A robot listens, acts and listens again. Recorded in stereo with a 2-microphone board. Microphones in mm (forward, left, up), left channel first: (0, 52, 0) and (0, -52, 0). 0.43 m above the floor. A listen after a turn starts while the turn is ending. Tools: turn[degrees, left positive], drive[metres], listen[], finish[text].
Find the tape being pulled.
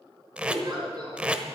Action: turn[-30]
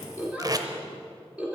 Thought: So it is at 135° right.
Action: turn[-135]
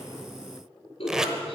Action: finish[Facing the tape being pulled, under 1 m away.]